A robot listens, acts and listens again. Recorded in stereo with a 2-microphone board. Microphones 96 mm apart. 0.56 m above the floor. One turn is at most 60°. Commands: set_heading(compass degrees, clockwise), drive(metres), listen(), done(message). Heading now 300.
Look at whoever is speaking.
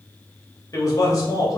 set_heading(260)
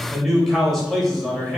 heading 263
done("Facing the man speaking.")